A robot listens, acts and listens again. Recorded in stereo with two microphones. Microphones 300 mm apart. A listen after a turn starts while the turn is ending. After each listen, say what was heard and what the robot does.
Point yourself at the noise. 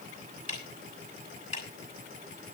Turn 90° right.
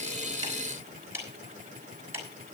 So it is at 10° right. Turn 10° right.
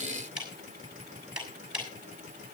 Facing the ticking, over 4 m away.